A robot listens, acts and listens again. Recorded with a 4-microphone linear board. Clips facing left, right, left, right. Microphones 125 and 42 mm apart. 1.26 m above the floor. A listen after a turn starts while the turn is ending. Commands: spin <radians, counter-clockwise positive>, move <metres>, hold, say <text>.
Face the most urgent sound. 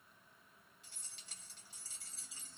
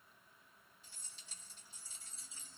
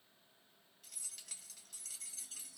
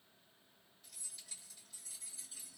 hold
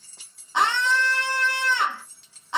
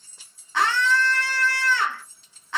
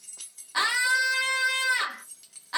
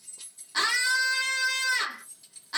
spin 0.35
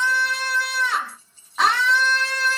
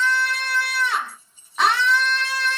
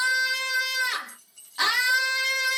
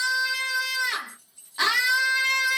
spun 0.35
say Facing the scream.